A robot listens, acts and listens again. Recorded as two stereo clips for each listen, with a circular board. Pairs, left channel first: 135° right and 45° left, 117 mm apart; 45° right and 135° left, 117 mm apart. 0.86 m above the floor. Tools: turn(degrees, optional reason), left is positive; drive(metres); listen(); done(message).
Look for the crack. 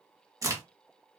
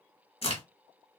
turn(degrees=-15, reason="The crack: 15° right.")
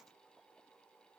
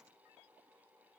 done("I heard a crack from this way, but can't make it out now.")